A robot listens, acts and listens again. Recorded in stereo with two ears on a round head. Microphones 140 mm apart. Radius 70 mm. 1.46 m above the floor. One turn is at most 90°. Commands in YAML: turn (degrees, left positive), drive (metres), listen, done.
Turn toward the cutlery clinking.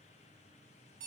listen: true
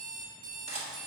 turn: -40
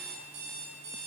listen: true
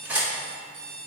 turn: -15
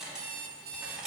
done: "Facing the cutlery clinking."